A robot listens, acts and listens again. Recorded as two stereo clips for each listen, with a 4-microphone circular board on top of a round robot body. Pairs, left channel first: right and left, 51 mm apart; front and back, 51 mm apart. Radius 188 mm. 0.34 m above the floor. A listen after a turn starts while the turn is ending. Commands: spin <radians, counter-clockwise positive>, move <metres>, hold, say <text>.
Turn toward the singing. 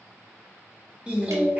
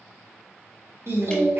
spin 2.62
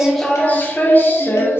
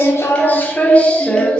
spin -1.22
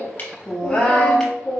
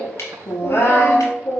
spin -0.52
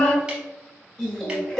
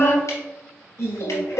spin -0.26
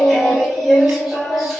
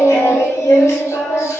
say Found it: singing, straight ahead.